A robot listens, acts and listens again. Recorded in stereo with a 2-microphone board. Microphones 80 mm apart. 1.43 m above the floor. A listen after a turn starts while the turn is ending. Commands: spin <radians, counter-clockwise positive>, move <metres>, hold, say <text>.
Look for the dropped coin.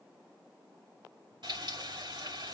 hold
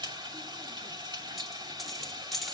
spin 0.52
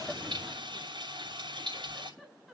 hold
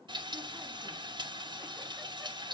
say I heard a dropped coin, but can't make it out now. It was about 30° right or 150° left.